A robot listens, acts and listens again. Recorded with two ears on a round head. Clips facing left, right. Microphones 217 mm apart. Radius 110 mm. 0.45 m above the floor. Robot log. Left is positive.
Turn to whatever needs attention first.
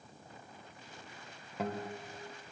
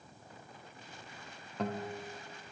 cmd idle
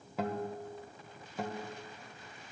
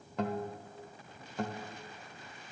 cmd idle
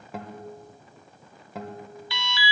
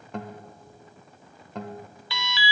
note: The alarm: about 65° right or 115° right.
cmd yaw -65
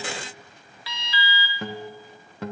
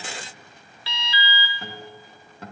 note: So it is at 25° right.
cmd yaw -25
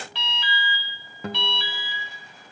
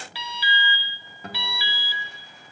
note: The alarm is now 10° right.
cmd yaw -10
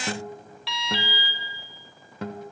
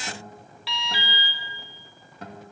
end: Facing the alarm, under 1 m away.